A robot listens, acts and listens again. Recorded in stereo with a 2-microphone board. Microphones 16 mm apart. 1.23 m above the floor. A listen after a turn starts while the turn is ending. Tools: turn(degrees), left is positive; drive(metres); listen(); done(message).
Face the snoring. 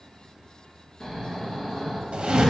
turn(degrees=35)
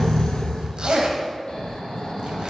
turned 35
turn(degrees=110)
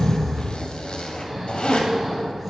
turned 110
turn(degrees=-15)
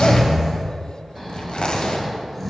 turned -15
done("Found it: snoring, straight ahead, 1 to 2 m away.")